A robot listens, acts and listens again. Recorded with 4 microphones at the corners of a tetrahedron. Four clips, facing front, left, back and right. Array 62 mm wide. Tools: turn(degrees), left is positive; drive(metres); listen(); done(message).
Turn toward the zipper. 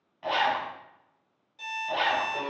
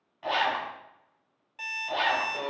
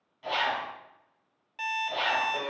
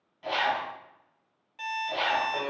turn(degrees=40)
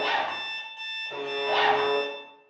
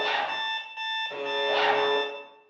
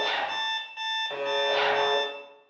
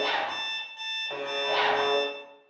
done("Found it: a zipper, straight ahead, 1 to 2 m away.")